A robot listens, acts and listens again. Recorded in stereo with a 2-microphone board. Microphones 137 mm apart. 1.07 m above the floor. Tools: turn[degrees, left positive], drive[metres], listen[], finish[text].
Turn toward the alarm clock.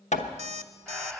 Thought: The alarm clock: about 55° right or 125° right.
Action: turn[-55]
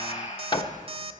Thought: So it is at 55° right.
Action: turn[-55]
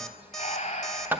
Action: finish[Facing the alarm clock.]